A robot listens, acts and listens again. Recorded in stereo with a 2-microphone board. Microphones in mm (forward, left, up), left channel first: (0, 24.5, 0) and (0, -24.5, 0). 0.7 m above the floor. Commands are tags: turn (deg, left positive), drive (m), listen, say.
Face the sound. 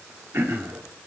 <turn deg="-60"/>
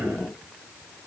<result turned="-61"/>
<listen/>
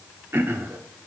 <turn deg="-55"/>
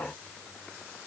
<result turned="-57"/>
<listen/>
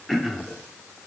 <say>Facing the throat clearing, under 1 m away.</say>